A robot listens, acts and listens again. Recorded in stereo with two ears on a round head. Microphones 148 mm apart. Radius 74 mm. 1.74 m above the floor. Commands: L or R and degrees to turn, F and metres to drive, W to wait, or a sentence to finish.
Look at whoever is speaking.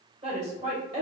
R40
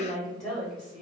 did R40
Found it: a woman speaking, straight ahead.